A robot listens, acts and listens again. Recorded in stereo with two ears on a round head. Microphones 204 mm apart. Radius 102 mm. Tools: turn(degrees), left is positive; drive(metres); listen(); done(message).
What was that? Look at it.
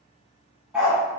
turn(degrees=-30)
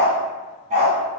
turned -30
turn(degrees=-145)
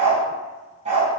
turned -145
turn(degrees=-35)
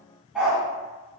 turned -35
done("Found it: a dog barking, straight ahead.")